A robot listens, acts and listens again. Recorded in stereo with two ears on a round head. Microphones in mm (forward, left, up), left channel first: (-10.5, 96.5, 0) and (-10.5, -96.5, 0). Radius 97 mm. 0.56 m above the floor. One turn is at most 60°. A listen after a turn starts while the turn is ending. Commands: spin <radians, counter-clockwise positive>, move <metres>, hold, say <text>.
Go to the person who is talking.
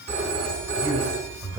spin -0.52
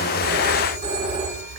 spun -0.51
hold
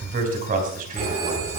spin -1.05
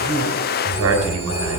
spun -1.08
spin -1.05
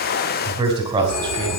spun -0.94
spin -0.35
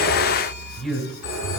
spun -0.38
move 1.0
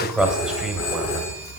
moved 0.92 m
move 1.0
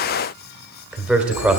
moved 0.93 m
move 1.0
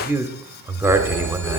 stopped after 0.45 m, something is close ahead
spin -0.26
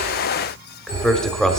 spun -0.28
say I am next to the man speaking.